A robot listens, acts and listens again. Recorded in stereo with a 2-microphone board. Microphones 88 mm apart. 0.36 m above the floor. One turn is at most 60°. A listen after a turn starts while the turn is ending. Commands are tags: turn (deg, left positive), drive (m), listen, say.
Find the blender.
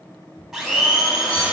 <turn deg="-30"/>
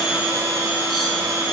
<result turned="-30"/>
<turn deg="-60"/>
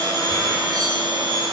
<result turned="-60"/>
<turn deg="-60"/>
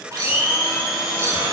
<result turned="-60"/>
<say>Found it: a blender, straight ahead, 1 to 2 m away.</say>